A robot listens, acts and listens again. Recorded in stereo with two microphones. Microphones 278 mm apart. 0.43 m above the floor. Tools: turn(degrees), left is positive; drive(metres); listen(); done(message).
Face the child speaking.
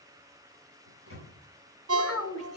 turn(degrees=60)
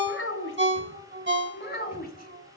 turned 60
turn(degrees=35)
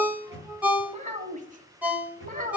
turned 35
turn(degrees=-30)
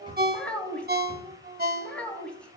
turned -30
done("Facing the child speaking.")